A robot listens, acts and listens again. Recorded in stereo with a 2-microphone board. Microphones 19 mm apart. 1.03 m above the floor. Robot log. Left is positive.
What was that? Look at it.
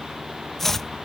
cmd yaw +30
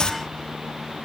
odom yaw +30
note: So it is at 135° left.
cmd yaw +135
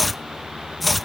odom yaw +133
end: Found it: chopping, straight ahead.